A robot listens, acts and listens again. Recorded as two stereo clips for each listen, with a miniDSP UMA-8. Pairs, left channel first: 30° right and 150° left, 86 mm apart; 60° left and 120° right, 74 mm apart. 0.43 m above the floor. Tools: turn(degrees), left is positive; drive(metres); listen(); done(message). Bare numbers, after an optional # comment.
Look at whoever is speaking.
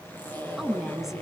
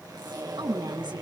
# The woman speaking: 125° right.
turn(-125)
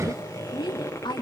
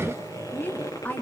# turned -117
done("Facing the woman speaking.")